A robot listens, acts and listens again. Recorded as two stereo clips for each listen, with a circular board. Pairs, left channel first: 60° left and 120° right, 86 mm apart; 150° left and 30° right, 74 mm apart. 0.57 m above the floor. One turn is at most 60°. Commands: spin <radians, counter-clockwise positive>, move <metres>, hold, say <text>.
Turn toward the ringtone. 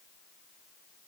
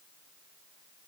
hold
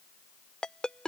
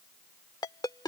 spin 1.05
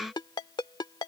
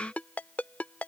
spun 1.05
spin 1.05
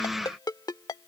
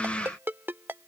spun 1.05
spin 0.44
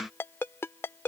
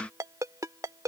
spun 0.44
say Found it: a ringtone, straight ahead.